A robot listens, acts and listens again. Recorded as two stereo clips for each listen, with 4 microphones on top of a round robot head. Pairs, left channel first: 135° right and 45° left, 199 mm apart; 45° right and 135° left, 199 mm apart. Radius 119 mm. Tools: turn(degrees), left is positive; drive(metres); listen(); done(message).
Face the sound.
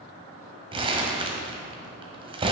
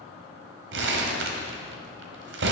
turn(degrees=110)
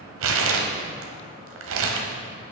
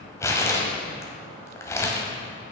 turn(degrees=35)
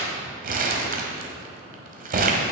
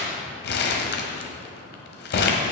done("Facing the crumpling.")